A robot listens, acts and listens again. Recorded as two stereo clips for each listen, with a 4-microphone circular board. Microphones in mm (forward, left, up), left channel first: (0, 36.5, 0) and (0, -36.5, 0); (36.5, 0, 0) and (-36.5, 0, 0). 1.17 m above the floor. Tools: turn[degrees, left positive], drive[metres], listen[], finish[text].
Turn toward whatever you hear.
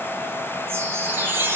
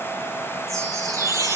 Thought: The chime: 150° right.
Action: turn[-150]
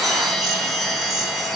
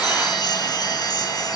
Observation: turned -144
Action: finish[Found it: a chime, straight ahead, over 4 m away.]